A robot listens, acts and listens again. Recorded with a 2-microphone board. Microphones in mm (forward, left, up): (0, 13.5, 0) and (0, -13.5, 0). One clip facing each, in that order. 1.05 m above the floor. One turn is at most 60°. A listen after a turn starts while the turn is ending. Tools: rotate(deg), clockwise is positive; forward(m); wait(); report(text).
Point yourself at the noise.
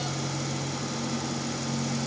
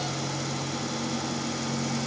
wait()
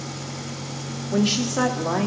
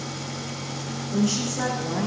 rotate(-55)
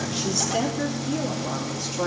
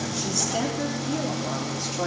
rotate(10)
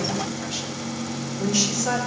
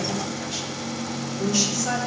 report("Found it: a woman speaking, straight ahead, 2 to 4 m away.")